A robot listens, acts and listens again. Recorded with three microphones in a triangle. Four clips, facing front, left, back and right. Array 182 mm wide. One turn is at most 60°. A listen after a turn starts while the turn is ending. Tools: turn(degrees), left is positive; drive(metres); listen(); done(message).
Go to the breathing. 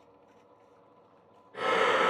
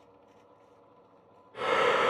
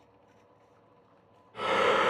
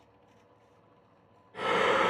turn(degrees=10)
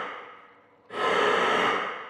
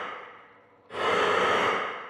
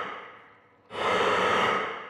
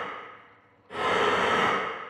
drive(metres=1.0)
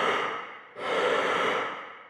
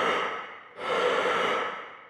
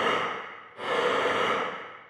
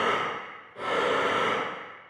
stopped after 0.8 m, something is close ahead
done("Arrived at the breathing, straight ahead.")